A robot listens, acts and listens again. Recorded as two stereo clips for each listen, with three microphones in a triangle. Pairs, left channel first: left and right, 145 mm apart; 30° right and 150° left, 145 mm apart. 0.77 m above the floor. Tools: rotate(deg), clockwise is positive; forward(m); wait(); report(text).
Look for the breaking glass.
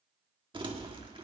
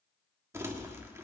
wait()
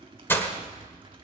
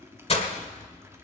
rotate(-15)
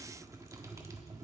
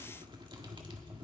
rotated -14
report("Facing where the breaking glass came from. I can't hear it now.")